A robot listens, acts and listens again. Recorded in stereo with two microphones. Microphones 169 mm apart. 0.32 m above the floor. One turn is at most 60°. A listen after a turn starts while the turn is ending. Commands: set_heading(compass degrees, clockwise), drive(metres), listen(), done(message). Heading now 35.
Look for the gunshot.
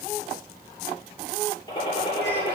set_heading(5)
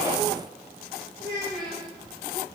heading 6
listen()
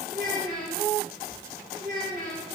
done("I heard a gunshot, but can't make it out now. It was about straight ahead or 120° left.")